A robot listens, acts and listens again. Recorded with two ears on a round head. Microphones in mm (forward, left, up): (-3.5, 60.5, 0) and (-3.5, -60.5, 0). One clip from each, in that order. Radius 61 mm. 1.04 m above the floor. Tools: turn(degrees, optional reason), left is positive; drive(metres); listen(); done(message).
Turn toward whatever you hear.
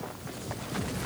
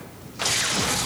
listen()
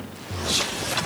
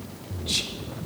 listen()
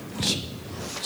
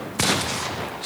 turn(degrees=30)
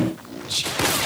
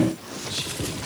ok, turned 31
turn(degrees=135, reason="So it is at 135° left.")
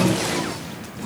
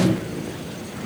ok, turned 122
turn(degrees=15, reason="Nothing new. It was at 15° left.")
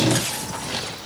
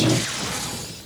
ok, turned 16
listen()
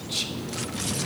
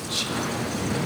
done("Facing the whispering.")